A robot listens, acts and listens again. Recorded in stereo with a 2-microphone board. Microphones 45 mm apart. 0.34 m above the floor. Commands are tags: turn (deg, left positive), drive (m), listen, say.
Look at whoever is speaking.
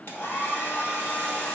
<listen/>
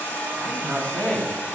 <turn deg="25"/>
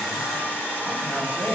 <turn deg="125"/>
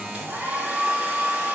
<listen/>
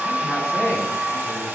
<turn deg="25"/>
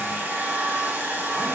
<listen/>
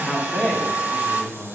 <turn deg="10"/>
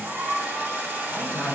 <say>Found it: a man speaking, straight ahead.</say>